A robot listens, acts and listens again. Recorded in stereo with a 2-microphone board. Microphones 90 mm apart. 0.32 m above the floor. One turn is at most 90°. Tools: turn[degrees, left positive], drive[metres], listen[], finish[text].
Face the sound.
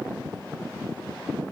Action: listen[]
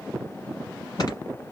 Action: listen[]
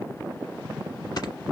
Thought: The snoring: about 50° left or 130° left.
Action: turn[50]
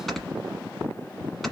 Action: finish[Facing the snoring.]